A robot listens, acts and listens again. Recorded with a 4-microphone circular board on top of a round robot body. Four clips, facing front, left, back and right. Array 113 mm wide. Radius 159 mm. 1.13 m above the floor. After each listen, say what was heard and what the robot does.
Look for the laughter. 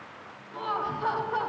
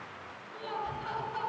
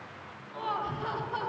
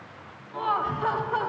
The laughter: 60° right. Turn 60° right.
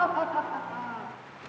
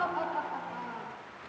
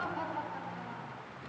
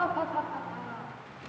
The laughter is now 20° left. Turn 20° left.
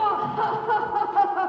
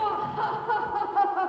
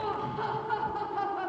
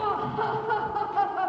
The laughter is now 35° left. Turn 35° left.
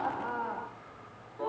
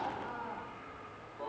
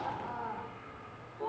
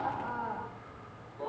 Facing the laughter.